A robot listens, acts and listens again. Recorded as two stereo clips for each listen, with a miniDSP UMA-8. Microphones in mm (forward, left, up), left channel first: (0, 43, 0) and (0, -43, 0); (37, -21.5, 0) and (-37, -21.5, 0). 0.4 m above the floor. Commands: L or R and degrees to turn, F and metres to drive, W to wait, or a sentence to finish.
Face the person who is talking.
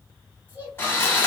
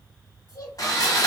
R25
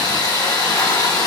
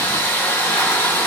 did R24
W
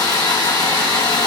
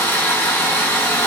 W
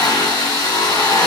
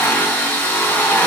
I heard a child speaking from this way, but can't make it out now.